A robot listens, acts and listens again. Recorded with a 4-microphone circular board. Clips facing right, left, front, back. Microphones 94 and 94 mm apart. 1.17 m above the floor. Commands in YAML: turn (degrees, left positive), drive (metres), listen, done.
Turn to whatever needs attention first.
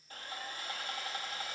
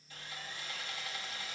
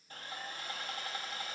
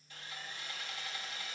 listen: true
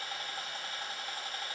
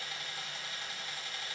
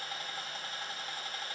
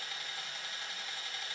listen: true
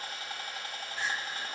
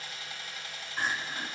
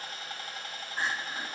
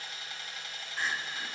turn: 50
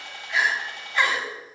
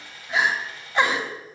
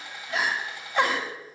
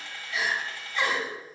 turn: 20
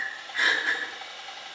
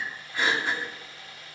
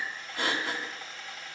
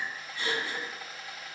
done: "Found it: crying, straight ahead."